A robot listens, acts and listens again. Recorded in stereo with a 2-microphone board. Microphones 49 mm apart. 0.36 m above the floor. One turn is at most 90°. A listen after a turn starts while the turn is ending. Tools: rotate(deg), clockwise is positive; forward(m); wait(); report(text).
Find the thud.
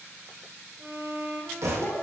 rotate(75)
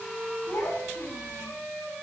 wait()
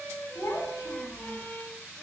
report("I heard a thud, but can't make it out now. It was about straight ahead or 30° right.")